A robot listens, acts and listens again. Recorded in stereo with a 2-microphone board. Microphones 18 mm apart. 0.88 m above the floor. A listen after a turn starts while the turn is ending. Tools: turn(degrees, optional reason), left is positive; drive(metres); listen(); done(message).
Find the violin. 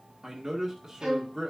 turn(degrees=-45, reason="The violin: about 45° right or 135° right.")
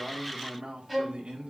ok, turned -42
done("Facing the violin, 2 to 4 m away.")